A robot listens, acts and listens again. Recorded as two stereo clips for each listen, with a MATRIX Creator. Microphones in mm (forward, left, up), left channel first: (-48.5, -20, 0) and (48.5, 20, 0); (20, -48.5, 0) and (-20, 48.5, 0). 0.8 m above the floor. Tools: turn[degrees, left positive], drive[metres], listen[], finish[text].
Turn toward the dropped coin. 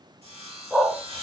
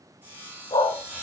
Action: listen[]
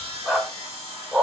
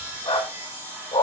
Action: listen[]
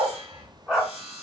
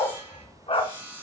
Action: finish[I can't make out a dropped coin to turn to.]